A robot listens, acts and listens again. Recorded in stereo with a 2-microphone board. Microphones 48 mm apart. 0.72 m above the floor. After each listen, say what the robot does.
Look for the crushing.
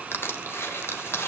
Turn 60° left.
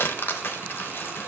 Turn 55° left.
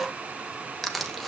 Found it: crushing, straight ahead.